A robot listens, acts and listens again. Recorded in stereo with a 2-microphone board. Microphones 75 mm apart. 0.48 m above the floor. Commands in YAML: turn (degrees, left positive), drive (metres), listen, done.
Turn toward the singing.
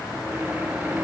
listen: true
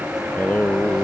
turn: 20
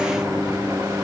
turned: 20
listen: true
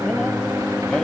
turn: 30
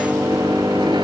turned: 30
turn: -20
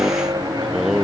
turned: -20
done: "Facing the singing."